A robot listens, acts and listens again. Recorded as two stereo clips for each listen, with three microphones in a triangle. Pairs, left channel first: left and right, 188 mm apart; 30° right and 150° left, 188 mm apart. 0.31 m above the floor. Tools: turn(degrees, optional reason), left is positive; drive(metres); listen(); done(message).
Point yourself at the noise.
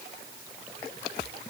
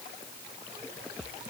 listen()
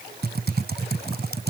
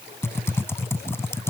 turn(degrees=-105, reason="The typing on a keyboard: 105° right.")
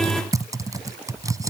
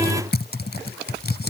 turn(degrees=-20, reason="The typing on a keyboard is now 20° right.")
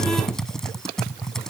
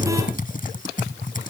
done("Found it: typing on a keyboard, straight ahead.")